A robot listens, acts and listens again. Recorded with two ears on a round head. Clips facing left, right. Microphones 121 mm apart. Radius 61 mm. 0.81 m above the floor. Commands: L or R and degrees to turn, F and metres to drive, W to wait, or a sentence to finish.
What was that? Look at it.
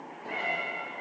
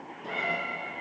R90
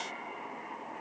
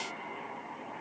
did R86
W
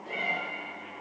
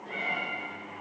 L10
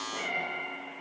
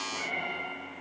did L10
Found it: a cat meowing, straight ahead.